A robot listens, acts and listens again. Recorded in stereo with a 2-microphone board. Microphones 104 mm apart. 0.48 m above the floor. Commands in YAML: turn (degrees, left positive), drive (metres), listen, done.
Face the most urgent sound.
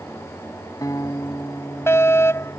turn: 25
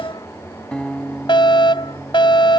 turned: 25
turn: 125
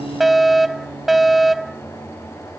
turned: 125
done: "Found it: a fire alarm, straight ahead."